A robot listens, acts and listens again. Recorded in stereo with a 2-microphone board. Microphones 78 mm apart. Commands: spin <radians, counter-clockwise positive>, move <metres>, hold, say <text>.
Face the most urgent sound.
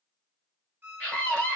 spin 0.26
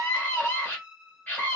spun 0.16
spin 0.44
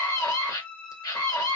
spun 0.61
spin 2.01
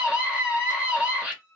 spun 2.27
spin -0.26
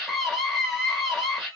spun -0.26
say Facing the scream, 1 to 2 m away.